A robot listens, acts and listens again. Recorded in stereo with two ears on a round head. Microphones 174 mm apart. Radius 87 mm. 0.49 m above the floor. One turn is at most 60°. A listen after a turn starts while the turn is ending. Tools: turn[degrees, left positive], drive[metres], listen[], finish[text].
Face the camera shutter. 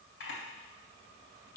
Thought: The camera shutter: about 65° left or 115° left.
Action: turn[60]
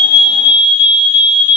Action: listen[]
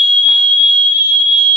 Action: listen[]
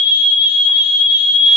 Action: finish[I heard a camera shutter, but can't make it out now. It was about 5° left or 55° left.]